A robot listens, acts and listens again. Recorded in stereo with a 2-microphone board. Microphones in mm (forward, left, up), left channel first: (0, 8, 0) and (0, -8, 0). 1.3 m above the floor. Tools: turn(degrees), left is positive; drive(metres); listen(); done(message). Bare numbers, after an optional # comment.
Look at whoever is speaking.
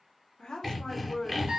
turn(90)
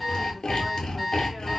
listen()
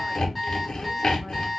listen()
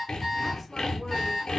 done("I heard a woman speaking from this way, but can't make it out now.")